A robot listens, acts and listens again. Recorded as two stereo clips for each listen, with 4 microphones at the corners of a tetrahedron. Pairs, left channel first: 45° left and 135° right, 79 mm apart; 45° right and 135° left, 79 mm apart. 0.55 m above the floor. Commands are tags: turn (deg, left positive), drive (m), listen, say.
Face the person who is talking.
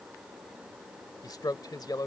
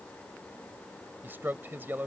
<turn deg="75"/>
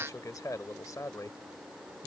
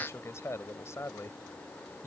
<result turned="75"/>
<say>Found it: a man speaking, straight ahead.</say>